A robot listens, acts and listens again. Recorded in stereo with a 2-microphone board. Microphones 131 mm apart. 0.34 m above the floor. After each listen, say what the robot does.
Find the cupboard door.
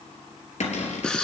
Turn 60° left.
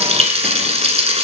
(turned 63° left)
Keep listening.
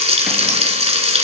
Keep listening.
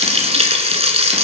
I heard a cupboard door, but can't make it out now. It was about 5° right or 55° left.